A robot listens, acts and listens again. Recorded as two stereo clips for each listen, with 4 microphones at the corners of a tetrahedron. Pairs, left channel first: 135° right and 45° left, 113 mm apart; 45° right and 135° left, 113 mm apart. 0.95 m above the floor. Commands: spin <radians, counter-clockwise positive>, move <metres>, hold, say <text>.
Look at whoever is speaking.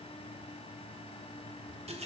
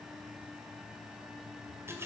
hold
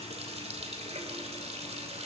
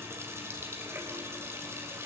hold
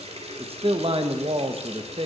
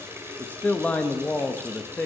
spin 0.52
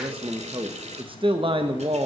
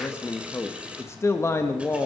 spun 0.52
spin 0.26
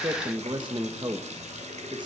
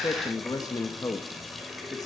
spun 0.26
say Facing the man speaking, 1 to 2 m away.